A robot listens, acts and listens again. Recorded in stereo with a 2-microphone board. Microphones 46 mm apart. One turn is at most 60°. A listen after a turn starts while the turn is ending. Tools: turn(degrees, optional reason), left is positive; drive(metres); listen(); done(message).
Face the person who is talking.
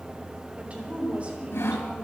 turn(degrees=-30, reason="The woman speaking: about 30° right or 150° right.")
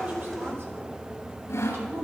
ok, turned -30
listen()
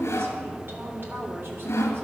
turn(degrees=-60, reason="So it is at 120° right.")
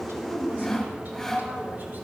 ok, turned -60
turn(degrees=-60, reason="Nothing new. It was at 60° right.")
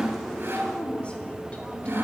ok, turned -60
turn(degrees=25, reason="The woman speaking is now 25° left.")
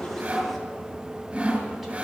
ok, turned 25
listen()
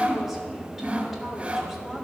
listen()
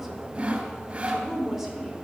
done("Facing the woman speaking.")